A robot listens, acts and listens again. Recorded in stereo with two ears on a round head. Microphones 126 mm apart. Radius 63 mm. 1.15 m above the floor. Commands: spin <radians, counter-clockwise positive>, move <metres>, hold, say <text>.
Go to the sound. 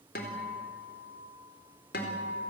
spin 1.57
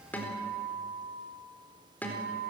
spin 0.17
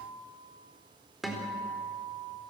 move 1.0
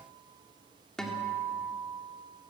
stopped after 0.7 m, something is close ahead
say Blocked. The guitar is further on, straight ahead.